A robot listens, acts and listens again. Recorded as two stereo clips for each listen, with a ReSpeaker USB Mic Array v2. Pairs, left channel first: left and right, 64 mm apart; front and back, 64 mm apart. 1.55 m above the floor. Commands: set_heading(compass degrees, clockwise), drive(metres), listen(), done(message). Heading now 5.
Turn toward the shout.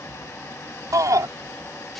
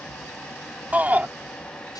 set_heading(120)
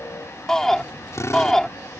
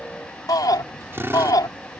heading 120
set_heading(110)
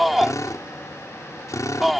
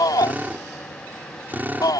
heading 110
done("Found it: a shout, straight ahead.")